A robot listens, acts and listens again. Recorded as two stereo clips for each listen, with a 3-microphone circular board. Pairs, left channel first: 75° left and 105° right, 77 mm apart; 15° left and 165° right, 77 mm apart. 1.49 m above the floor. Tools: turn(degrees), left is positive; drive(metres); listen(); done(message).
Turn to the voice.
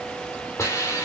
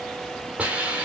listen()
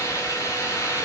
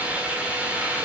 listen()
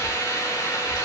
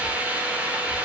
done("I can't make out anyone speaking, only a hiss.")